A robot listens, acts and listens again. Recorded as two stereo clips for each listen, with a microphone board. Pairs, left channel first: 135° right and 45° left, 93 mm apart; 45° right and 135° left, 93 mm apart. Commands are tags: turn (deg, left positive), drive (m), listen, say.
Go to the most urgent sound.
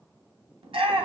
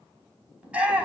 <turn deg="60"/>
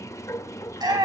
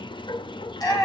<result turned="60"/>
<drive m="1.0"/>
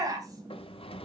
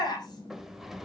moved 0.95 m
<drive m="1.0"/>
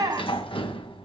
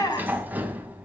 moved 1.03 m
<drive m="1.0"/>
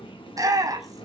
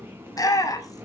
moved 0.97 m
<drive m="1.0"/>
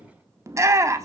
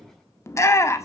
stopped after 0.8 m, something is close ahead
<say>I am next to the shout.</say>